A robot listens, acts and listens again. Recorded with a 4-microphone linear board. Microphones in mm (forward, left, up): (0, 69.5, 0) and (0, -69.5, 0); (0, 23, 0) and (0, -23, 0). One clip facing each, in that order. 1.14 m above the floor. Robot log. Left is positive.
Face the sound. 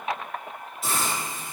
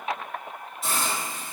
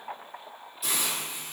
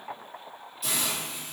cmd yaw +30
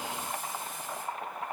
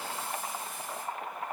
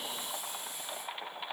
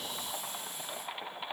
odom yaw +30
cmd idle
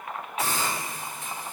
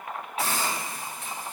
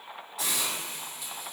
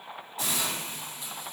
note: So it is at 30° right.
cmd yaw -30
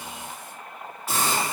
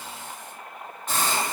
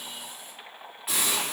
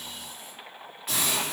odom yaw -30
end: Facing the hiss.